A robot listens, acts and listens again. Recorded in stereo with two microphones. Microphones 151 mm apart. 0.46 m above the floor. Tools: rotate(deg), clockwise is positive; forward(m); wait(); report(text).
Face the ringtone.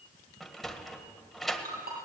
rotate(90)
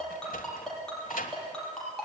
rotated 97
report("Facing the ringtone, over 4 m away.")